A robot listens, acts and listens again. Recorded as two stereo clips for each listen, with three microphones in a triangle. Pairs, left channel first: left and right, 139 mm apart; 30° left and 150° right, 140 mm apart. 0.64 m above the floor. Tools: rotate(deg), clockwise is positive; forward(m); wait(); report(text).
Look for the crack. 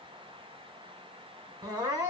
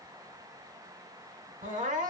wait()
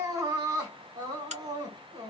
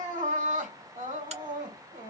rotate(115)
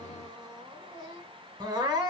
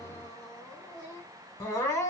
report("I heard a crack from this way, but can't make it out now.")